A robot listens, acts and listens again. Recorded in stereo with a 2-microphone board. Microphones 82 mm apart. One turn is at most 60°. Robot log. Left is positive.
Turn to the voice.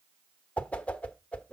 cmd idle
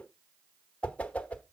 cmd idle
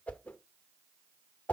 end: I can't make out anyone speaking, only a whoosh.